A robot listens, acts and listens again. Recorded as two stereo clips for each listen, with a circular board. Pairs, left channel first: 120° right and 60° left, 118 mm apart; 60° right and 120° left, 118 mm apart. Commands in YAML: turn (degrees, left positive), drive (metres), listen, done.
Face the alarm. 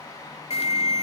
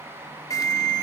turn: -115
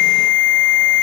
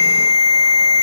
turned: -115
turn: -35
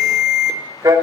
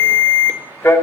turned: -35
done: "Facing the alarm."